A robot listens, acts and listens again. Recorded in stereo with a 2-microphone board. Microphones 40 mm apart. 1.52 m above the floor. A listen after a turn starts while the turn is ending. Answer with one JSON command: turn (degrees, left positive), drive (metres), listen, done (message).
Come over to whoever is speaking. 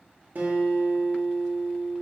{"listen": true}
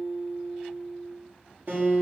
{"listen": true}
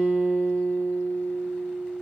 {"done": "I can't make out anyone speaking to turn to."}